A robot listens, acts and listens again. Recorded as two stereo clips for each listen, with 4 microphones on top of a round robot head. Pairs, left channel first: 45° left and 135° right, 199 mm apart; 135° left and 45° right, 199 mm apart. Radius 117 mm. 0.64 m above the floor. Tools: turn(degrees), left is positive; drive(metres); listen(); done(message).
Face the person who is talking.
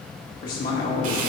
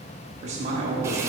turn(degrees=10)
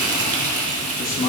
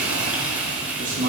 done("Found it: a man speaking, straight ahead.")